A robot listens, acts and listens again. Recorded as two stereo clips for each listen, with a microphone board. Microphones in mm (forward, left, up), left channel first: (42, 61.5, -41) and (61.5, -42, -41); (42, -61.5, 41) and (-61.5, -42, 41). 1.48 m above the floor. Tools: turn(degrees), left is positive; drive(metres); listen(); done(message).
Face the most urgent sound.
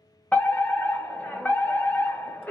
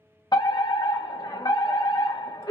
turn(degrees=30)
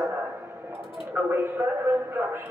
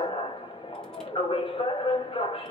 turn(degrees=-15)
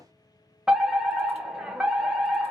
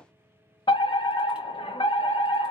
done("Facing the fire alarm.")